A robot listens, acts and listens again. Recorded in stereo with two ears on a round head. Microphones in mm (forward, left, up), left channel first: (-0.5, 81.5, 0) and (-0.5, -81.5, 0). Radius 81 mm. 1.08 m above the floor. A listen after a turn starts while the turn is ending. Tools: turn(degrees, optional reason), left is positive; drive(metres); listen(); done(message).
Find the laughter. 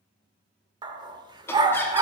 turn(degrees=30)
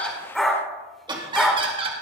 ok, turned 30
turn(degrees=-30, reason="So it is at 30° right.")
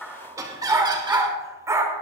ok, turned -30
turn(degrees=-20, reason="The laughter is now 20° right.")
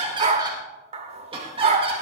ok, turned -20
turn(degrees=-30, reason="The laughter is now 30° right.")
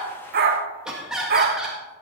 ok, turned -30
done("Found it: laughter, straight ahead, 1 to 2 m away.")